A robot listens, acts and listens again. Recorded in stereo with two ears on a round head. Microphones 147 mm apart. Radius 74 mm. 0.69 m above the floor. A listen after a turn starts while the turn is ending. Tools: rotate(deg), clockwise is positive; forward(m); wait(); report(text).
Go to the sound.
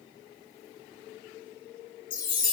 rotate(-50)
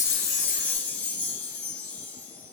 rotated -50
rotate(-10)
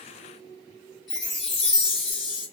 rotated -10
forward(1.0)
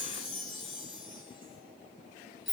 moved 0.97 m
forward(1.0)
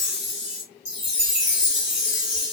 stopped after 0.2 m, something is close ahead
report("Arrived at the chime, straight ahead.")